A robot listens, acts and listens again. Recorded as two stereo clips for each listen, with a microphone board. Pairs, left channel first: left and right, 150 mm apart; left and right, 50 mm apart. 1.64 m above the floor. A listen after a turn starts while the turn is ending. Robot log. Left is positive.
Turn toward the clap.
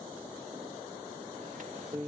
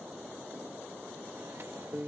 cmd idle
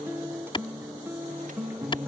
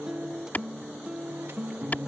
note: The clap: about 35° left or 145° left.
cmd yaw +35
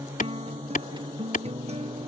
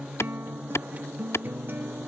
note: So it is at 115° left.
cmd yaw +115
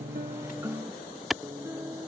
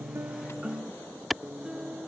end: Found it: a clap, straight ahead.